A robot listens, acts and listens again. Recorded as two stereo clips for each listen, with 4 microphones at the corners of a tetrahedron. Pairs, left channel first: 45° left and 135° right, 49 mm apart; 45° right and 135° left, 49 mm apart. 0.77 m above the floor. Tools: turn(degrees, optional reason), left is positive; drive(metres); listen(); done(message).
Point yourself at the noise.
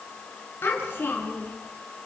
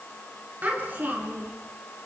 turn(degrees=85, reason="The child speaking: 85° left.")
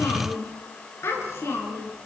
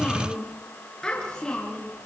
turn(degrees=30, reason="The child speaking is now 30° left.")
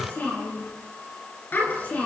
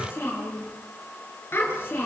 done("Found it: a child speaking, straight ahead.")